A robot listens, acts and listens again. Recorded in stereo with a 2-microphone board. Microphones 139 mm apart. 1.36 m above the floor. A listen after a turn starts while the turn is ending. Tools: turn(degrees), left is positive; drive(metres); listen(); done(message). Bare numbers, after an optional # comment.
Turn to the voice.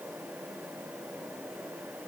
listen()
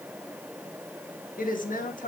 # The woman speaking: about 70° left or 110° left.
turn(70)
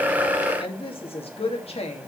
# So it is at 50° left.
turn(50)
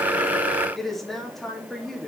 done("Found it: a woman speaking, straight ahead, 2 to 4 m away.")